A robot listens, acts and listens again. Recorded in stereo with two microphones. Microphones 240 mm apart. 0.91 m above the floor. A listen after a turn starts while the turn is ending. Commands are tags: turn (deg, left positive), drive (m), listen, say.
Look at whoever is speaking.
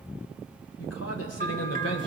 <turn deg="90"/>
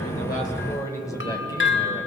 <turn deg="15"/>
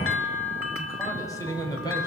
<turn deg="15"/>
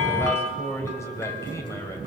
<turn deg="10"/>
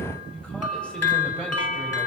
<listen/>
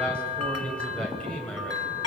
<say>Found it: a man speaking, straight ahead, 2 to 4 m away.</say>